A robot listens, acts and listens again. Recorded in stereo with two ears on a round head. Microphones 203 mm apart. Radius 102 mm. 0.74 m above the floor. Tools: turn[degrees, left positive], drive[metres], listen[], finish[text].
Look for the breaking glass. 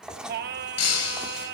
Action: turn[90]
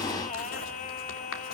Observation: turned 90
Action: finish[I heard breaking glass from this way, but can't make it out now.]